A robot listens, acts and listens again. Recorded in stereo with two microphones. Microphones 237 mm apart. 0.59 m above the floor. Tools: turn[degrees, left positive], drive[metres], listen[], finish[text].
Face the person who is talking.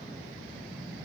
Action: listen[]
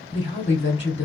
Thought: The woman speaking: about 50° left or 130° left.
Action: turn[50]
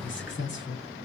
Thought: So it is at 65° left.
Action: turn[65]
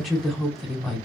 Action: finish[Facing the woman speaking.]